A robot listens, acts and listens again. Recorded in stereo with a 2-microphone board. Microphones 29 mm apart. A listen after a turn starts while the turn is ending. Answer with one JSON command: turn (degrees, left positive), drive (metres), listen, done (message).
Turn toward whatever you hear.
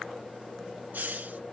{"turn": -90}
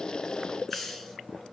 {"done": "Found it: a hiss, straight ahead."}